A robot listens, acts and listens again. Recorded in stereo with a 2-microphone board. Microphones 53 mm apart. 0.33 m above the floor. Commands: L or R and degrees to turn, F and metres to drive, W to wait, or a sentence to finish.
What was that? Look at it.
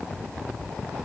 W
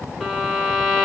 R30
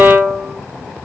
R145
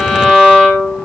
Found it: a violin, straight ahead, 2 to 4 m away.